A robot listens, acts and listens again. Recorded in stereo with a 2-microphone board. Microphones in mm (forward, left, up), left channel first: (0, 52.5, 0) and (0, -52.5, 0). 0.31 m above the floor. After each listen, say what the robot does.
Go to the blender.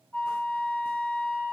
Keep listening.
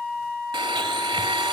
Turn 45° right.
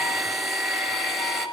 Drive 1.0 m forward.
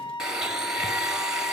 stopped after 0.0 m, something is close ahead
Blocked. The blender is further on, straight ahead.